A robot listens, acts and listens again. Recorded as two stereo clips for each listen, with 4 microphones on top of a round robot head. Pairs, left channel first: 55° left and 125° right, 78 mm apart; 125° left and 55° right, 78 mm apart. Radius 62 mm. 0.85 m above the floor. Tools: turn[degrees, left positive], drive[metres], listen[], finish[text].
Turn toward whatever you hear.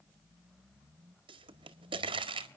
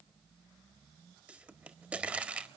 Thought: The pop: 125° right.
Action: turn[-125]
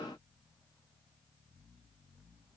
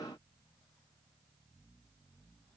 Action: finish[Facing where the pop came from. I can't hear it now.]